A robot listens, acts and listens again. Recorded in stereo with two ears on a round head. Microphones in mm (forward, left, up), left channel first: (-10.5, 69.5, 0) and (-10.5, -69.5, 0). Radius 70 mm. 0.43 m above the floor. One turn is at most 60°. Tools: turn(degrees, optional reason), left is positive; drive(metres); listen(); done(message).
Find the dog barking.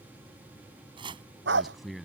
turn(degrees=-60)
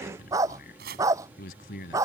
turn(degrees=-20, reason="So it is at 20° right.")
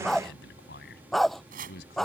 done("Facing the dog barking.")